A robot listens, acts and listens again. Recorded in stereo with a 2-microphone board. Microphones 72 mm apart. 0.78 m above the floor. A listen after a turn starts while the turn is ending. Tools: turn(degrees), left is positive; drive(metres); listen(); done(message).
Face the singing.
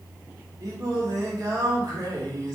turn(degrees=-60)
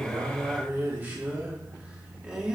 turn(degrees=-15)
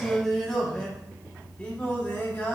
turn(degrees=25)
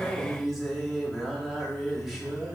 done("Facing the singing, 2 to 4 m away.")